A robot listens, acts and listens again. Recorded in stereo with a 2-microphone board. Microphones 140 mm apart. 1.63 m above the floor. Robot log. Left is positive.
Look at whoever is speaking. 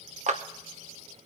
cmd idle
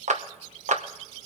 cmd idle
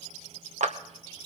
end: I can't make out anyone speaking to turn to.